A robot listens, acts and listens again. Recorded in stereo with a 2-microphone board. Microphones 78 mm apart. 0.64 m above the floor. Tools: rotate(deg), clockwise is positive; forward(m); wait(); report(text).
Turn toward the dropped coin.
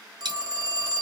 rotate(90)
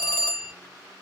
report("Facing where the dropped coin came from. I can't hear it now.")